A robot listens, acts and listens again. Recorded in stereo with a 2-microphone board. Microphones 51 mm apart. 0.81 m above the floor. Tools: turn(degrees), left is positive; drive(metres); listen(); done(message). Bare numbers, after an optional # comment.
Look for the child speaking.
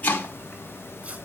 listen()
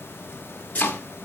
listen()
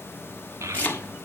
# The child speaking: about 70° right or 110° right.
turn(-70)
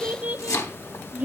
# So it is at 30° right.
turn(-30)
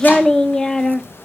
# The child speaking is now 15° left.
turn(15)
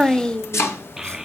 # The child speaking is now 10° right.
turn(-10)
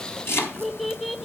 done("Found it: a child speaking, straight ahead, 1 to 2 m away.")